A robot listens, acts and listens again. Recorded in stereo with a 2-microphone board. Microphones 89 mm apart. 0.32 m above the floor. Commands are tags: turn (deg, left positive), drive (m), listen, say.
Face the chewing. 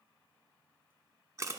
<listen/>
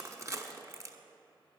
<listen/>
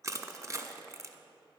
<say>I can't make out chewing, only crushing.</say>